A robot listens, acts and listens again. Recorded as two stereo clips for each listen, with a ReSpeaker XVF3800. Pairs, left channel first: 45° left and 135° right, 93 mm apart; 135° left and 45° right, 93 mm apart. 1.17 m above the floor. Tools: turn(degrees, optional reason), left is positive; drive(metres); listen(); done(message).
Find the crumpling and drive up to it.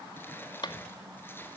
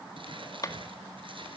turn(degrees=-25, reason="The crumpling: 25° right.")
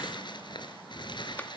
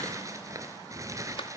turn(degrees=10, reason="The crumpling is now 10° left.")
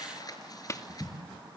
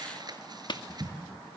drive(metres=1.0)
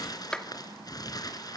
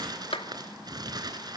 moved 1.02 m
drive(metres=1.0)
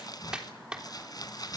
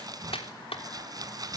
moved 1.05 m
drive(metres=1.0)
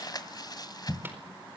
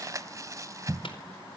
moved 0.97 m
drive(metres=1.0)
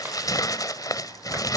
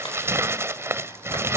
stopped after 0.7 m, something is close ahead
done("Arrived at the crumpling, straight ahead.")